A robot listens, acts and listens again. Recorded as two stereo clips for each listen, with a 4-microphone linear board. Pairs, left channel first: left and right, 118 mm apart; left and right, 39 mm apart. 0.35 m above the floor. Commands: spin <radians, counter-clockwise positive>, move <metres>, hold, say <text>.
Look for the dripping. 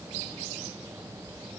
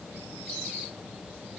hold
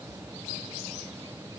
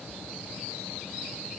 hold
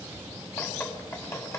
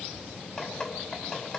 spin 0.35
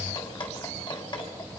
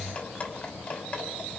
spin 2.44
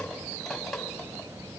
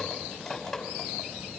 say Facing the dripping, 2 to 4 m away.